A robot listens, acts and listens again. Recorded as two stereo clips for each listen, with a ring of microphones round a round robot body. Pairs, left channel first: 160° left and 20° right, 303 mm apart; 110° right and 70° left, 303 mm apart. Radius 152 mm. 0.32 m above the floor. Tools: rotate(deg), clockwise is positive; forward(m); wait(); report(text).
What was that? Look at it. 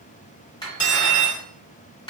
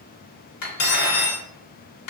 rotate(130)
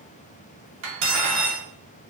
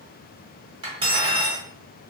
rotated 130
report("Facing the cutlery clinking.")